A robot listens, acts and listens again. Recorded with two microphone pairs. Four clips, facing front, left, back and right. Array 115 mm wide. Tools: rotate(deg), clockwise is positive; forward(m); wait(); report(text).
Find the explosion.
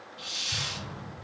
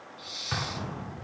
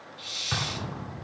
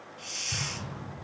rotate(-135)
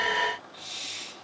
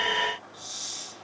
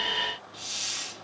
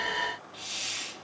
report("I heard an explosion from this way, but can't make it out now.")